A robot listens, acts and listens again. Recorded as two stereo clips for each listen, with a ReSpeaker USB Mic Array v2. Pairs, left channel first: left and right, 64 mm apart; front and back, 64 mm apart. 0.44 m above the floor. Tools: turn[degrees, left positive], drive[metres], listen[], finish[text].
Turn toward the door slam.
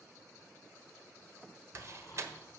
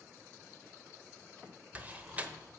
Thought: The door slam: 120° right.
Action: turn[-120]
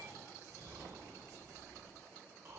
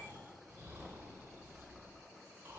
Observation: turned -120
Action: finish[I heard a door slam from this way, but can't make it out now.]